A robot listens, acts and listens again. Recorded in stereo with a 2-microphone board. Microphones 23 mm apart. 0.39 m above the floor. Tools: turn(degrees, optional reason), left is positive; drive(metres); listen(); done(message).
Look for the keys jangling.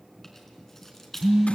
turn(degrees=30)
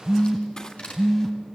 turn(degrees=140, reason="So it is at 140° left.")
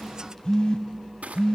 turn(degrees=10, reason="The keys jangling is now 10° left.")
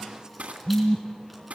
listen()
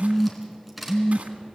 done("Found it: keys jangling, straight ahead, 2 to 4 m away.")